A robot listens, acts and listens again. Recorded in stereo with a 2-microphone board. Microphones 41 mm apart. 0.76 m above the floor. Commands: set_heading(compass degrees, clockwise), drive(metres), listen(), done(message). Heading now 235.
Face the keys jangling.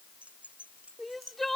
set_heading(270)
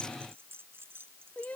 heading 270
set_heading(25)
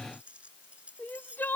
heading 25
set_heading(50)
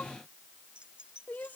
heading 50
set_heading(70)
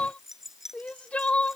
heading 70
done("Found it: keys jangling, straight ahead.")